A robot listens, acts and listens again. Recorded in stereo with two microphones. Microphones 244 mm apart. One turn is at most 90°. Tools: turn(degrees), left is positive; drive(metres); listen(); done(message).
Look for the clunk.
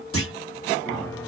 turn(degrees=60)
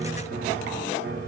listen()
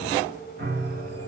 done("I heard a clunk, but can't make it out now. It was about straight ahead or 60° left.")